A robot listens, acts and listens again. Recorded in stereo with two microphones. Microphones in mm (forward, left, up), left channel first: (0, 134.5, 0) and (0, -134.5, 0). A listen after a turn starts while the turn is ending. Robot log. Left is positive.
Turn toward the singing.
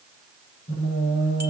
note: The singing: about 60° left or 120° left.
cmd yaw +60
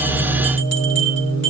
note: So it is at 65° left.
cmd yaw +65
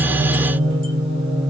end: Found it: singing, straight ahead.